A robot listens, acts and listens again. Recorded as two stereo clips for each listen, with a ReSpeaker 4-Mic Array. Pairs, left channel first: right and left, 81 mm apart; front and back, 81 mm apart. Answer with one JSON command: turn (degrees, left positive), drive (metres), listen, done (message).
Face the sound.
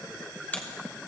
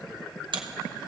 {"turn": -160}
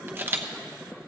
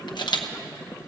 {"turn": 25}
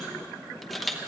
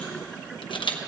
{"done": "Found it: a camera shutter, straight ahead."}